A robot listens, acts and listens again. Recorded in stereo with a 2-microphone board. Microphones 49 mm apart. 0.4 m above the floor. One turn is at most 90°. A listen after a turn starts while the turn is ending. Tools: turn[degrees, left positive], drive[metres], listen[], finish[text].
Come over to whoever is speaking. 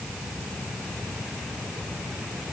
Action: listen[]
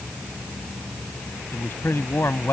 Thought: The man speaking: about 55° left or 125° left.
Action: turn[55]
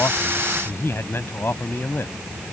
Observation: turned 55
Thought: So it is at 65° left.
Action: turn[65]
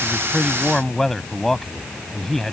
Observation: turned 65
Thought: The man speaking is now 10° left.
Action: turn[10]
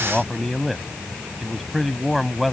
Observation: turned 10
Action: drive[1.0]
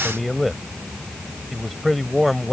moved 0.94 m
Action: drive[1.0]
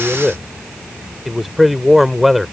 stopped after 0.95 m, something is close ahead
Action: finish[Arrived at the man speaking, straight ahead.]